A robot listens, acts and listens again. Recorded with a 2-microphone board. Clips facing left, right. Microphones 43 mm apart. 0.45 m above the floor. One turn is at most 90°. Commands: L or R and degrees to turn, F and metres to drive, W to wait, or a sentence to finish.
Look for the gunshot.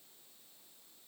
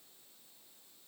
W
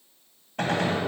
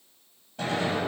L90
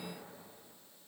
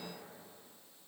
Facing where the gunshot came from. I can't hear it now.